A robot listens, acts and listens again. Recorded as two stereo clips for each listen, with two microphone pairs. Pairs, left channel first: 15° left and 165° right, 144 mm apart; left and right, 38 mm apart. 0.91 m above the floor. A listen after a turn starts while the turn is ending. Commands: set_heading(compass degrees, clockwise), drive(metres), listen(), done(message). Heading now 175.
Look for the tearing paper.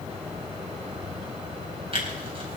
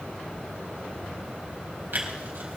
set_heading(290)
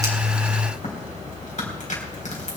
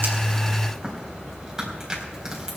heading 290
set_heading(305)
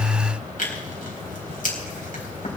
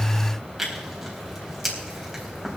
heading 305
done("Found it: tearing paper, straight ahead.")